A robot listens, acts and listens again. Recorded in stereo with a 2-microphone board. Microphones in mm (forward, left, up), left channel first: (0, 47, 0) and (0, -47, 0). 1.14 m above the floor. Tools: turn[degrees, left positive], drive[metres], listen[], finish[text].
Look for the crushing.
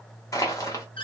Thought: The crushing: about 35° left or 145° left.
Action: turn[35]
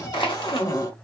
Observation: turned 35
Thought: So it is at 105° left.
Action: turn[105]
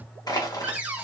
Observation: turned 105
Thought: The crushing is now 50° left.
Action: turn[50]
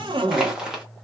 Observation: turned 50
Action: finish[Facing the crushing.]